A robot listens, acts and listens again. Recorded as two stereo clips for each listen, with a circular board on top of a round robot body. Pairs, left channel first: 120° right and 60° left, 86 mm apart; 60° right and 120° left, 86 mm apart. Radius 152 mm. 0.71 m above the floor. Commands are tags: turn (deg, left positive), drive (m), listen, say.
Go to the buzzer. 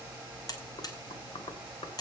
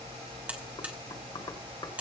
<turn deg="-165"/>
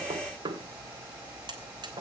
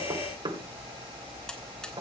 <listen/>
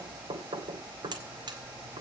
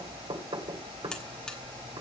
<turn deg="20"/>
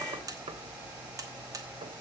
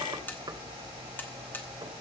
<turn deg="10"/>
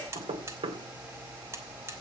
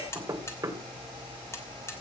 <drive m="1.0"/>
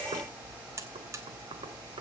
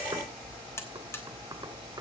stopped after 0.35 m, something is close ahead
<say>Something is in my way. I am facing the buzzer but have not reached it.</say>